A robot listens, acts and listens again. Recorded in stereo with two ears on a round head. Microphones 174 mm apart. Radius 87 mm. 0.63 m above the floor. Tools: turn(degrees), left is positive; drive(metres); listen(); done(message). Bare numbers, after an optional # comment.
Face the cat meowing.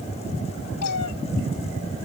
# The cat meowing: about 75° left or 105° left.
turn(75)
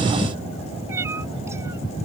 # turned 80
# So it is at 15° right.
turn(-15)
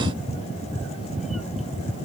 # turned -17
listen()
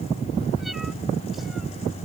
listen()
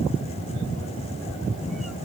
done("I heard a cat meowing from this way, but can't make it out now.")